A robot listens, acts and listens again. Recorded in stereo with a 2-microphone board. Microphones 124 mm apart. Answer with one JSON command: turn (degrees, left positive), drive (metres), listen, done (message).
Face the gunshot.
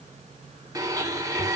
{"listen": true}
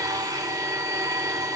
{"listen": true}
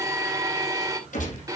{"turn": 90}
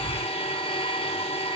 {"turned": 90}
{"done": "I heard a gunshot from this way, but can't make it out now."}